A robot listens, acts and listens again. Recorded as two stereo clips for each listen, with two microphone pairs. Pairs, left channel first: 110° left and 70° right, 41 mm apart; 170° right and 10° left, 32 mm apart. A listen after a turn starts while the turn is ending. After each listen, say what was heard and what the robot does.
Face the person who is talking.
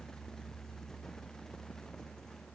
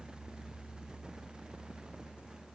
Keep listening.
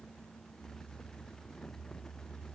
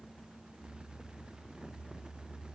Keep listening.
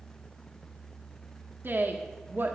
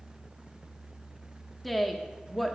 The woman speaking: 85° right. Turn 85° right.
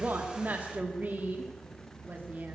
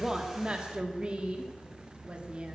The woman speaking is now 40° right. Turn 40° right.
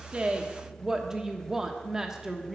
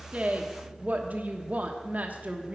Found it: a woman speaking, straight ahead.